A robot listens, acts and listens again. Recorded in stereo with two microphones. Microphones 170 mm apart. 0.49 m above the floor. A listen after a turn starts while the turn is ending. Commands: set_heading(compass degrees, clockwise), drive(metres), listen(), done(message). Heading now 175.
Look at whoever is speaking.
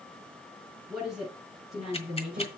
set_heading(205)
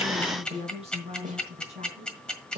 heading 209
set_heading(344)
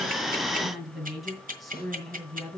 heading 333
done("Facing the woman speaking, 2 to 4 m away.")